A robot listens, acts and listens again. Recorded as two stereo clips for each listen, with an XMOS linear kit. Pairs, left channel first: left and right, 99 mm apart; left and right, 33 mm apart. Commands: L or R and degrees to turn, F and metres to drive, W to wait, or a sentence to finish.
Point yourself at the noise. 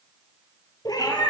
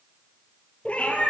L45
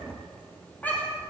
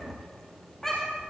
L15
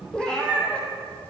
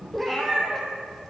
L10
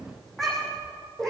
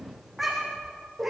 Found it: a cat meowing, straight ahead, 2 to 4 m away.